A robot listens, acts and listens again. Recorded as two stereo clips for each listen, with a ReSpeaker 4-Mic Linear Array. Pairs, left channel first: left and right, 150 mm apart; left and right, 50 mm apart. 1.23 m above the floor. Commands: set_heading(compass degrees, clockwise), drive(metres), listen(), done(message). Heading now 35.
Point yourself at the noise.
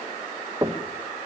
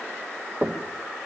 set_heading(60)
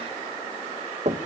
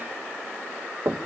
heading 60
set_heading(190)
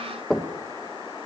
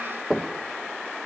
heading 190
done("Found it: knocking, straight ahead, 1 to 2 m away.")